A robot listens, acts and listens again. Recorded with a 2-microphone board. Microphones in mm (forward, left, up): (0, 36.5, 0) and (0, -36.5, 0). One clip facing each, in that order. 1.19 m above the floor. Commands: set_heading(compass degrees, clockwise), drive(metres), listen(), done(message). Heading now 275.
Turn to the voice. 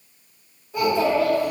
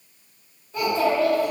set_heading(245)
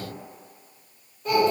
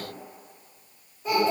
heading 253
set_heading(263)
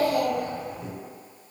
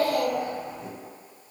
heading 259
done("Facing the child speaking.")